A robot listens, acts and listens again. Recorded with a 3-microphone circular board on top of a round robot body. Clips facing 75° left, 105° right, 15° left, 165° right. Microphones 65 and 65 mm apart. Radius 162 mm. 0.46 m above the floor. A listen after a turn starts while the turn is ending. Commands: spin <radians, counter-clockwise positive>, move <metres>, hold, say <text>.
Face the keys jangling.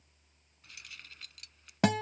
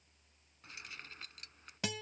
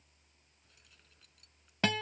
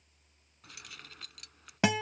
spin -2.88
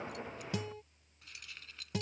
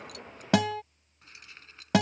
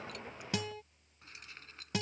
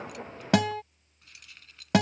spin -0.70
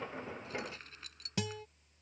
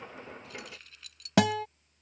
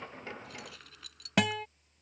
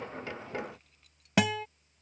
spin 0.35
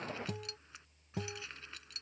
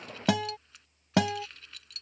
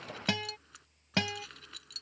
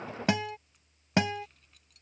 say Facing the keys jangling.